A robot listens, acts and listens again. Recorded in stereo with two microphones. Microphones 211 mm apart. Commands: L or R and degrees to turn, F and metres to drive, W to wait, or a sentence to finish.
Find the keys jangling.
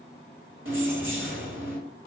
R70
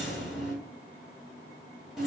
Facing the keys jangling.